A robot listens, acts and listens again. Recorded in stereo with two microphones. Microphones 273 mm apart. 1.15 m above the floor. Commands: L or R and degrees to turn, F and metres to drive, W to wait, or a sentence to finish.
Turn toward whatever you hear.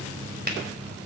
R35
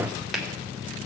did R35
Facing the finger snap, 2 to 4 m away.